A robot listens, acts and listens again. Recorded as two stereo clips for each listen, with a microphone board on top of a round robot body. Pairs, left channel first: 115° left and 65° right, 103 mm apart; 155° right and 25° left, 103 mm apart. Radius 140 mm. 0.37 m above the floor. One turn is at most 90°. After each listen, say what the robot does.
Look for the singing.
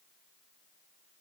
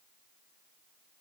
Keep listening.
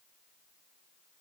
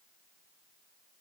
Keep listening.
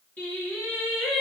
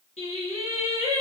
Turn 90° right.
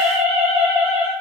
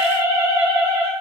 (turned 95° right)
Turn 35° right.
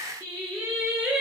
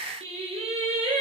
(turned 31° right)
Turn 15° left.
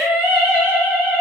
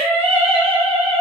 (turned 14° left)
Facing the singing.